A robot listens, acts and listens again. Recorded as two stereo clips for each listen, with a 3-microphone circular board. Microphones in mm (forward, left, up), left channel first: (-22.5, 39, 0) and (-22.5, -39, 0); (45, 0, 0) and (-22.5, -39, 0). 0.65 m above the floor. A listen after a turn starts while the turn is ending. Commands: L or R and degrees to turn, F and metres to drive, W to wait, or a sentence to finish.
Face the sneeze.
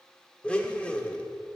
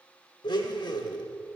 W
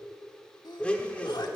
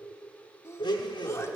L80
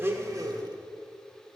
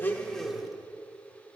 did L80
Facing where the sneeze came from. I can't hear it now.